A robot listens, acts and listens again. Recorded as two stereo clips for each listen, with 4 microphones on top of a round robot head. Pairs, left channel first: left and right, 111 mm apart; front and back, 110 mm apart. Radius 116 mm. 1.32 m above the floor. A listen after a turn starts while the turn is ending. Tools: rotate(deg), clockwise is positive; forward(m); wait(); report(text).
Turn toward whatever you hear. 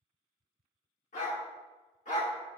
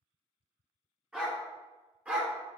rotate(-110)
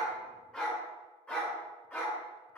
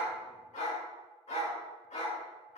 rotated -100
rotate(-20)
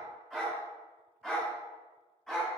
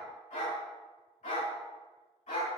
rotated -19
rotate(-10)
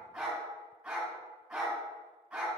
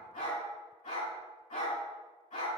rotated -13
report("Facing the dog barking, over 4 m away.")